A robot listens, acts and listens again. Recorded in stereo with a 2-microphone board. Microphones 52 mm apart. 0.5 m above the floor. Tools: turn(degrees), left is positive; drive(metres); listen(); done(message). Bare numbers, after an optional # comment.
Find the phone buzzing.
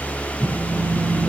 turn(-30)
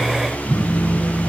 # So it is at 15° left.
turn(15)
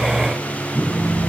done("Facing the phone buzzing, over 4 m away.")